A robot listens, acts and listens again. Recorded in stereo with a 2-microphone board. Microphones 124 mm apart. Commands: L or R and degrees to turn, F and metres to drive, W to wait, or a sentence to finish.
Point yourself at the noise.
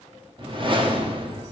R40
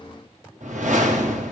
R100
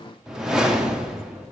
Found it: a whoosh, straight ahead, 1 to 2 m away.